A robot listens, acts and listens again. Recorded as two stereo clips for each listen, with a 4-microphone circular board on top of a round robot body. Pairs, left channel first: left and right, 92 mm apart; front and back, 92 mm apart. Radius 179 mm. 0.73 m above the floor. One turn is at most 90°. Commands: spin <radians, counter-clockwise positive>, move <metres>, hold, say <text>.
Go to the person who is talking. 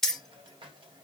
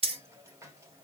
hold
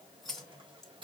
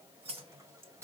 hold
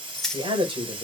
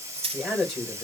spin -1.48
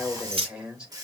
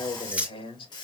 spin -0.17
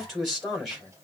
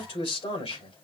move 1.0
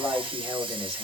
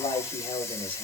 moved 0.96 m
move 1.0
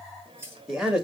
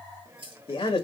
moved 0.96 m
move 1.0
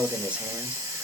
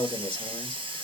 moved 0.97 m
spin -0.26
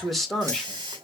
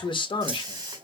move 1.0
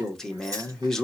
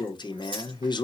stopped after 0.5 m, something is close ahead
say Arrived at the man speaking, straight ahead.